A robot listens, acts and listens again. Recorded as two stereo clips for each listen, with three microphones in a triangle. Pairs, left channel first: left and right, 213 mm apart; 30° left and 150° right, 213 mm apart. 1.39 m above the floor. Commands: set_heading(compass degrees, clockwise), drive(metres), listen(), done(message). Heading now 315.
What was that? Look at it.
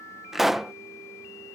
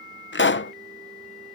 done("Facing the pop.")